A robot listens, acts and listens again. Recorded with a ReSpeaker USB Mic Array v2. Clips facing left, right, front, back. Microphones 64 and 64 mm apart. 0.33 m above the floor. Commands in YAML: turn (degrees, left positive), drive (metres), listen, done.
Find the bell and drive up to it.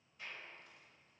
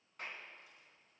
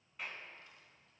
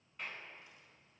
listen: true
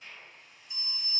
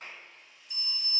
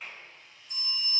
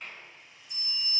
turn: 30
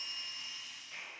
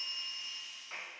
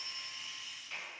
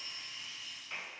turn: 10
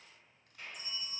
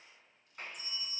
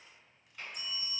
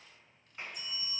drive: 1.0
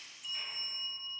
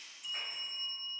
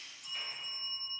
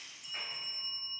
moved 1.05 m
drive: 1.0
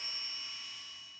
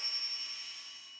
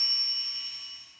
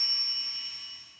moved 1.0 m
drive: 1.0
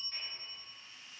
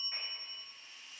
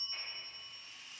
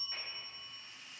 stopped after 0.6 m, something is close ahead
done: "I am next to the bell."